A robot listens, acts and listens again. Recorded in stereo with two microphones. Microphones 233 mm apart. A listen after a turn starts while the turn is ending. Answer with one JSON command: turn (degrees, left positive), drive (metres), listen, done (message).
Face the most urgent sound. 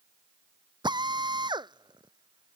{"listen": true}
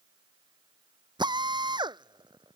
{"listen": true}
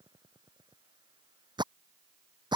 {"done": "I can't make out anything urgent to turn to."}